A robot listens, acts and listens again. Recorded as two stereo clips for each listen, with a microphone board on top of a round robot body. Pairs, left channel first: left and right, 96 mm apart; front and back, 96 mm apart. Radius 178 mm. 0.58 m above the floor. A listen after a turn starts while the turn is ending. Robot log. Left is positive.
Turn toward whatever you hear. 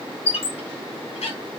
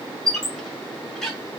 note: The squeak: 85° left.
cmd yaw +85
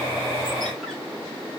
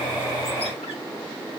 cmd idle
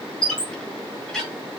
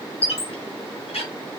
end: Facing the squeak, 1 to 2 m away.